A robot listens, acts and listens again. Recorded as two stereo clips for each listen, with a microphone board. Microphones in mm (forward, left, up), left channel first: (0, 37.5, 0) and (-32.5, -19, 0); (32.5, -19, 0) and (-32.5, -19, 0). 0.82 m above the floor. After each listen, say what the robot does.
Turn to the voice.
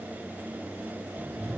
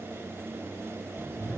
Keep listening.
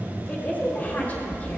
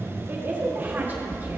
Turn 120° left.
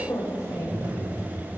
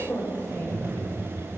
Turn 45° left.
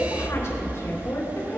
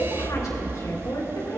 Turn 20° left.
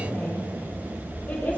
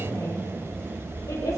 Keep listening.
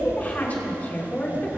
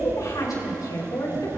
Found it: a woman speaking, straight ahead.